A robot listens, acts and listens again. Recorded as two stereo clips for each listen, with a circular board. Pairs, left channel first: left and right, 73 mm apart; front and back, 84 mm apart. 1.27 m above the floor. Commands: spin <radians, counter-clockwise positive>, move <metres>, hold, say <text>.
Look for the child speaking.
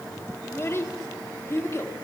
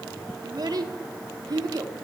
spin 2.44
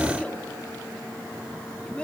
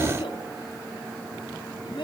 spin 0.26
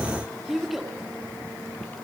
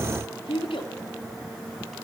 say Facing the child speaking.